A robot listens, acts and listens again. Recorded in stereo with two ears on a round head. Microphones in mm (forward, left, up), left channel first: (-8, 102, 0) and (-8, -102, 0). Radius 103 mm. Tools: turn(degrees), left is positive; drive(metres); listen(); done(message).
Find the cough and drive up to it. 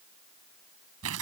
listen()
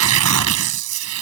listen()
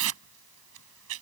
done("I can't make out a cough to turn to.")